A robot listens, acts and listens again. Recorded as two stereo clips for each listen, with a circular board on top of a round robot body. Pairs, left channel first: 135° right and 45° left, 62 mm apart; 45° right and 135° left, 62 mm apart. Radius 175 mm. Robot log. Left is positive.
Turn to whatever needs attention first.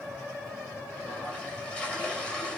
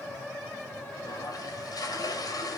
cmd idle
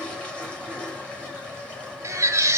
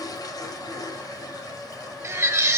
note: The baby crying: 90° left.
cmd yaw +90
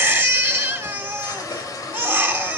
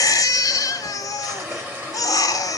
note: The baby crying is now 15° right.
cmd yaw -15
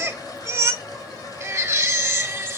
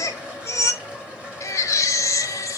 end: Facing the baby crying, 1 to 2 m away.